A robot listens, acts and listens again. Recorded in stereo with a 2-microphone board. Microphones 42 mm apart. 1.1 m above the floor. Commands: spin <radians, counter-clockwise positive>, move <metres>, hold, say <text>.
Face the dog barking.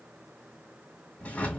hold
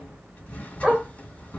spin -0.44
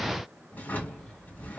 hold
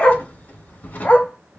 spin 0.70
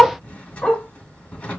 spin 0.35
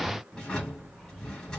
hold
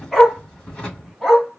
say Found it: a dog barking, straight ahead.